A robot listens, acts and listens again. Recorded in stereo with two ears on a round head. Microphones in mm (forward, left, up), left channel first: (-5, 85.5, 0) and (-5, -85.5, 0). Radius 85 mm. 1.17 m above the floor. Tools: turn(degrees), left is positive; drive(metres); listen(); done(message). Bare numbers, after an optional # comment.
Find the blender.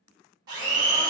# The blender: about 20° right or 160° right.
turn(-20)
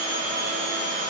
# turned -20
# So it is at 140° right.
turn(-140)
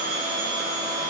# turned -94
# The blender is now 45° right.
turn(-45)
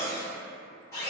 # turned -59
# The blender is now 15° left.
turn(15)
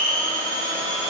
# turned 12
done("Found it: a blender, straight ahead, 1 to 2 m away.")